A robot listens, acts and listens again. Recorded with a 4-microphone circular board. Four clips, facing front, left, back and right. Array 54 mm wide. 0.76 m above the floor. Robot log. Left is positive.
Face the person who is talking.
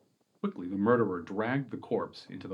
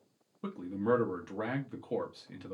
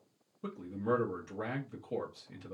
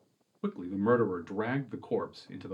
note: The man speaking: 15° right.
cmd yaw -15
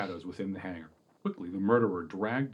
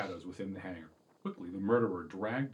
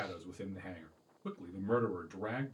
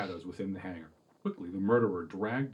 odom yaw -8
end: Found it: a man speaking, straight ahead, under 1 m away.